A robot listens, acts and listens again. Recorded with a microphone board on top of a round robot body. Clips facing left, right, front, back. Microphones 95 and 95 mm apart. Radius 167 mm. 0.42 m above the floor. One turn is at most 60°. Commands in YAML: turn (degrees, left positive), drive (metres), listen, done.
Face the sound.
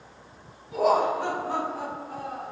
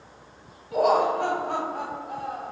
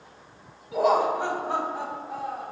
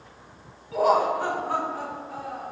turn: -60
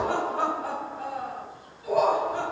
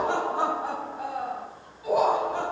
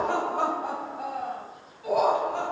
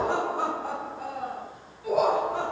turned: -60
turn: -20
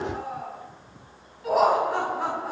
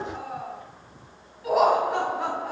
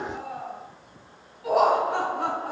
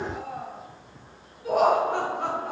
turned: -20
done: "Found it: laughter, straight ahead, over 4 m away."